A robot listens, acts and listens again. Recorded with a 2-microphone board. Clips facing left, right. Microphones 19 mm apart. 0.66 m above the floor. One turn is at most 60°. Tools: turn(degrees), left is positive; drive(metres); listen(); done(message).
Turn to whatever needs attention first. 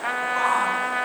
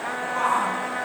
turn(degrees=20)
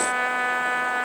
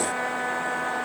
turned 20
listen()
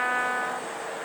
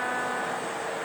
listen()
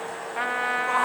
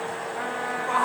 done("Found it: a shout, straight ahead.")